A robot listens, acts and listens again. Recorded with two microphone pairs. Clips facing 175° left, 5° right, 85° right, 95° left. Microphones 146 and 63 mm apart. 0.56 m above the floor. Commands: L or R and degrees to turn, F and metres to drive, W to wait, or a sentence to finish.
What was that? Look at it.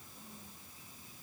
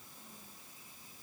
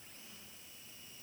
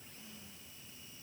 W
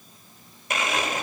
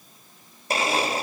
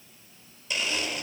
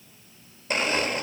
L50
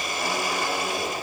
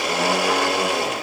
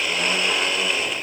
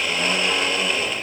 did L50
Found it: a blender, straight ahead, under 1 m away.